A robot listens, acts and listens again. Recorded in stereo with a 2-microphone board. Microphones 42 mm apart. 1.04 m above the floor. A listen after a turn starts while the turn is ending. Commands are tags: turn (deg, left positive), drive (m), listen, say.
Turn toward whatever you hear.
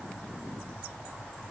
<listen/>
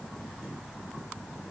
<listen/>
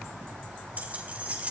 <turn deg="-35"/>
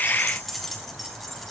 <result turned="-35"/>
<say>Found it: keys jangling, straight ahead.</say>